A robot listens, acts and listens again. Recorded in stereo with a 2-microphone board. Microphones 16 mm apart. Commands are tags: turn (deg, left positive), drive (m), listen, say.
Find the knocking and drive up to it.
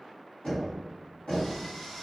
<turn deg="70"/>
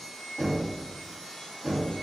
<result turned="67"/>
<drive m="1.0"/>
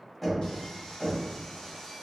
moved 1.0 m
<drive m="1.0"/>
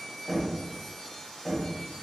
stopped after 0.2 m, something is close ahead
<say>I am next to the knocking.</say>